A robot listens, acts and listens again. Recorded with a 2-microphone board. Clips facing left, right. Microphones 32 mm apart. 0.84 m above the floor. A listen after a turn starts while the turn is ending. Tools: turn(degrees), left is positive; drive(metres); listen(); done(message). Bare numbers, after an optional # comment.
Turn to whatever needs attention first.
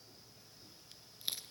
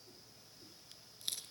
listen()
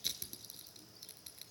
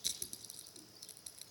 listen()
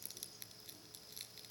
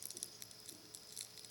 done("I can't make out anything urgent, only crushing.")